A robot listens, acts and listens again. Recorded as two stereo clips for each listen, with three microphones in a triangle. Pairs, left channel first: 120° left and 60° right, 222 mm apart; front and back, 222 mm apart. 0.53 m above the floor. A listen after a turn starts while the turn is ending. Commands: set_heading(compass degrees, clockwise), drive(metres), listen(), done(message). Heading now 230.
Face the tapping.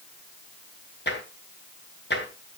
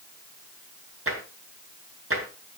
set_heading(70)
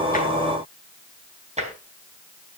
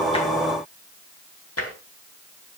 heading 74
done("Found it: tapping, straight ahead, 2 to 4 m away.")